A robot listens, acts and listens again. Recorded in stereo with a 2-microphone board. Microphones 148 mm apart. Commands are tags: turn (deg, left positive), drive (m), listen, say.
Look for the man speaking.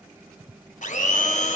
<listen/>
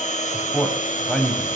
<turn deg="30"/>
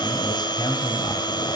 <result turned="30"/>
<listen/>
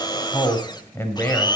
<turn deg="30"/>
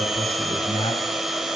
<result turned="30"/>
<turn deg="145"/>
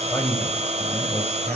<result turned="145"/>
<turn deg="15"/>
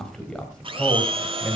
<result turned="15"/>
<say>Found it: a man speaking, straight ahead.</say>